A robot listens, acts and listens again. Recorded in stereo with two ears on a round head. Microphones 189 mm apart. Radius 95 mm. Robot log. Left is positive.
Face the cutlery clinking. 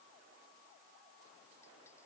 cmd idle
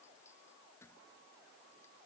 cmd idle
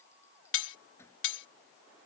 note: The cutlery clinking: about 65° left or 115° left.
cmd yaw +65
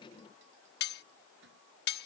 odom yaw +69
note: So it is at 50° left.
cmd yaw +50
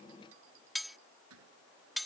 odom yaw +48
end: Found it: cutlery clinking, straight ahead.